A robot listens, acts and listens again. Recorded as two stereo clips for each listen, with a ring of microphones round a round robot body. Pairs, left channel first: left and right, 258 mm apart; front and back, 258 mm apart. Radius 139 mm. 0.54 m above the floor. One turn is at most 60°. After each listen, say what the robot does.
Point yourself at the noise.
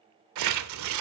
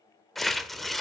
Turn 60° right.
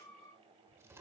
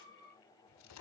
Turn 30° right.
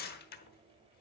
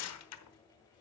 Turn 35° left.
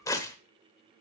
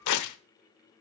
Turn 10° left.
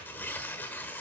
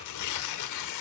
Found it: tearing paper, straight ahead.